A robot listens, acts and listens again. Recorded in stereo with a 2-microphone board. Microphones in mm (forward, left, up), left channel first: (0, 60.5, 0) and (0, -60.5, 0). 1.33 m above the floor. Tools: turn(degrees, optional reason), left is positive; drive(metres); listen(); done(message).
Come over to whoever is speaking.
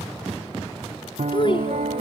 turn(degrees=45, reason="The child speaking: about 45° left or 135° left.")
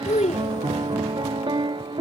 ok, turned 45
turn(degrees=85, reason="So it is at 85° left.")
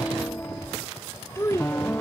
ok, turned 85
turn(degrees=25, reason="The child speaking is now 25° left.")
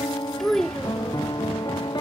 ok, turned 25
drive(metres=1.0)
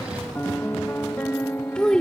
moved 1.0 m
turn(degrees=10, reason="The child speaking is now 10° left.")
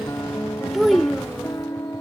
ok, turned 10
drive(metres=1.0)
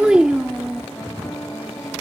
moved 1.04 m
drive(metres=1.0)
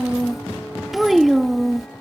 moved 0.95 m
drive(metres=1.0)
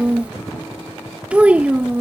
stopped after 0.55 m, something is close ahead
turn(degrees=-10, reason="The child speaking is now 10° right.")
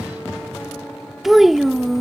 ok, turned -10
done("Arrived at the child speaking, straight ahead.")